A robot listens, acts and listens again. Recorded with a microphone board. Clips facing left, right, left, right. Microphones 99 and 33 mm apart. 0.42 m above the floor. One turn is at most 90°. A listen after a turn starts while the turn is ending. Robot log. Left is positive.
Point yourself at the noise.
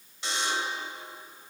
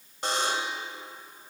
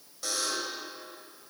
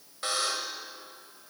note: The buzzer: about 55° right or 125° right.
cmd yaw -55
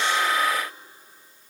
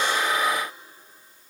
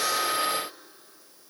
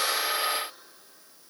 cmd idle
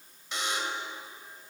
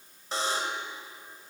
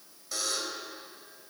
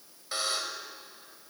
note: So it is at 50° right.
cmd yaw -50
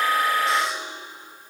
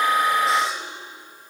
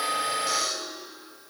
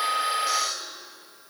end: Found it: a buzzer, straight ahead.